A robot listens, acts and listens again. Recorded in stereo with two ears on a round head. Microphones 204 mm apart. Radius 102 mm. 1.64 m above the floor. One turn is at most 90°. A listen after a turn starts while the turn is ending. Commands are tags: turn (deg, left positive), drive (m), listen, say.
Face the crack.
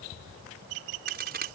<turn deg="-45"/>
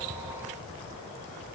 <listen/>
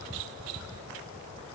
<say>I heard a crack, but can't make it out now. It was about straight ahead or 90° right.</say>